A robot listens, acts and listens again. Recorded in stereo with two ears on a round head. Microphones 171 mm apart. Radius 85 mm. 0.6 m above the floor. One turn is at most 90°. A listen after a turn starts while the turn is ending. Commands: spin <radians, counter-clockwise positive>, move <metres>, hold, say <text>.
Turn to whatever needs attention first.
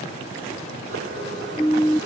spin 0.52
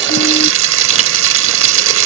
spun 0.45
hold
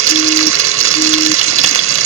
hold
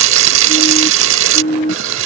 spin 1.57
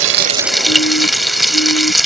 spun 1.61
spin 1.05
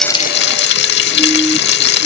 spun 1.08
hold
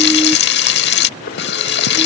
say Facing where the siren came from. I can't hear it now.